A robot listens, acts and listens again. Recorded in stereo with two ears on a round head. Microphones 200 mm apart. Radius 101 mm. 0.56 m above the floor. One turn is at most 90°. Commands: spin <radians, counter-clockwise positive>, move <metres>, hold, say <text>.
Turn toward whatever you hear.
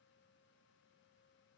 hold
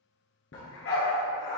spin 1.22
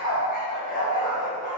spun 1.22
spin 0.61
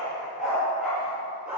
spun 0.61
say Facing the dog barking.